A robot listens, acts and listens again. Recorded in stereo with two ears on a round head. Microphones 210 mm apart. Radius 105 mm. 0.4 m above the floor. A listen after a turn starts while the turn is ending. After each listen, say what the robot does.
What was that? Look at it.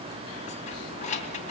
Turn 30° left.
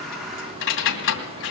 Turn 115° left.
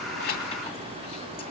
Keep listening.
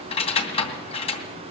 Turn 25° left.
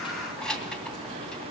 Found it: keys jangling, straight ahead, 2 to 4 m away.